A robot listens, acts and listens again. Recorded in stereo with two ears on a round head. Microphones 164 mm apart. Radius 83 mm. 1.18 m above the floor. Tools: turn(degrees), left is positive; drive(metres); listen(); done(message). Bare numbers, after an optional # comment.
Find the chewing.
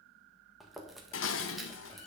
turn(30)
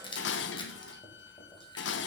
# So it is at 150° left.
turn(150)
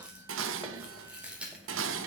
done("Facing the chewing, 1 to 2 m away.")